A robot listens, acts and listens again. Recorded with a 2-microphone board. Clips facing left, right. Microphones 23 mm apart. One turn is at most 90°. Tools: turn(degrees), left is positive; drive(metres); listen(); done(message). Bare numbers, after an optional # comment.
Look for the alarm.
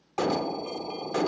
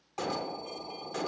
# The alarm: about 30° left or 150° left.
turn(30)
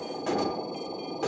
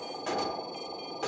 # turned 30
done("Found it: an alarm, straight ahead, 1 to 2 m away.")